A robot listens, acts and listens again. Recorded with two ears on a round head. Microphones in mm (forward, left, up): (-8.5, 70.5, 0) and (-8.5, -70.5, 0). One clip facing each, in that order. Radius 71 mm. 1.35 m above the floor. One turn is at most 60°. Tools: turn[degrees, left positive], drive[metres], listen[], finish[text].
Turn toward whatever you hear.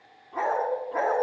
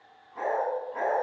Thought: The dog barking: about 65° left or 115° left.
Action: turn[60]
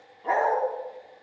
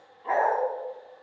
Thought: So it is at 55° left.
Action: turn[55]
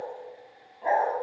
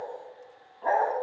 Thought: The dog barking is now 20° left.
Action: turn[20]
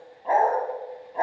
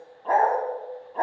Thought: The dog barking is now 15° left.
Action: turn[15]
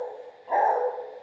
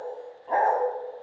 Thought: The dog barking is now 10° left.
Action: turn[10]
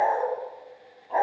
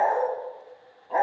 Action: finish[Found it: a dog barking, straight ahead.]